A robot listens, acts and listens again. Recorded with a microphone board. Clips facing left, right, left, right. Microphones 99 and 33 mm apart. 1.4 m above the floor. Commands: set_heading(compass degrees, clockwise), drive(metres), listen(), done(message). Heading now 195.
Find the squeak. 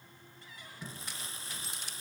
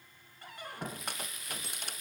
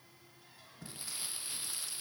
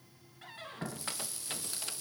set_heading(255)
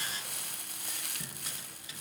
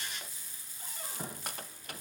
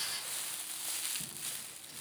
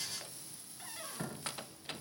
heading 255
set_heading(315)
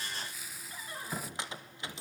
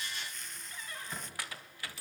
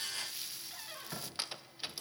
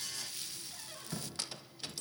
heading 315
set_heading(295)
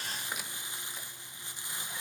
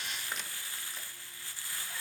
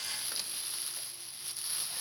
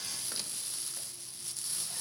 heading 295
listen()
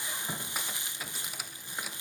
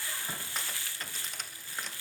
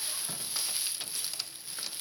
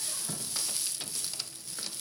set_heading(285)
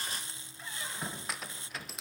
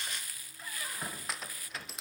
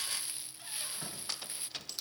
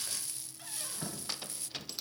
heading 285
done("Found it: a squeak, straight ahead.")